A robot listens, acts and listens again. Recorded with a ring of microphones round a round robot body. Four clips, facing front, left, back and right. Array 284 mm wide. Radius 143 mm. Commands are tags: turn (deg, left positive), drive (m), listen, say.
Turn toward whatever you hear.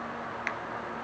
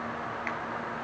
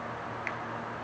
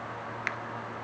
<turn deg="-60"/>
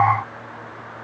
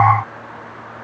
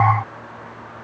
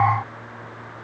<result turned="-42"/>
<turn deg="-20"/>
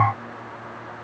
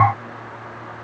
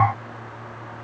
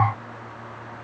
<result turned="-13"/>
<say>I heard a crack from this way, but can't make it out now.</say>